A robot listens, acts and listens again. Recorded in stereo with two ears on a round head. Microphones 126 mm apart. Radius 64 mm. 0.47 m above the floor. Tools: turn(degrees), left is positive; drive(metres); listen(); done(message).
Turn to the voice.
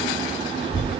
turn(degrees=30)
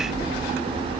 turn(degrees=-15)
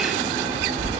turn(degrees=-15)
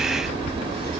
turn(degrees=-10)
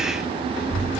turn(degrees=-10)
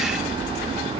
done("Facing the child speaking, 2 to 4 m away.")